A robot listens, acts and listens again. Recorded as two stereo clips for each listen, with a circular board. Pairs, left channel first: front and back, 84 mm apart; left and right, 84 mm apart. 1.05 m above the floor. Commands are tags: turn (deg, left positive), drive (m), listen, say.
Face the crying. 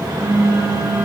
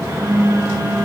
<listen/>
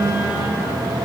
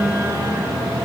<listen/>
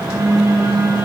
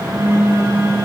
<say>I can't make out crying, only a phone buzzing.</say>